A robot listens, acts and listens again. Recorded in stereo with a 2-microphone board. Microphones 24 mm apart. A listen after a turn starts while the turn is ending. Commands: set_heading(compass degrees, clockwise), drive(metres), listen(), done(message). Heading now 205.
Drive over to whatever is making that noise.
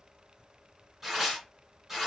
set_heading(235)
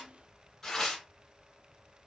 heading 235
set_heading(215)
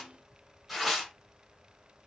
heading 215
drive(1.0)
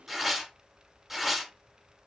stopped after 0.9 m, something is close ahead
set_heading(225)
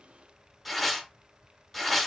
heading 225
done("Arrived at the tearing paper, straight ahead.")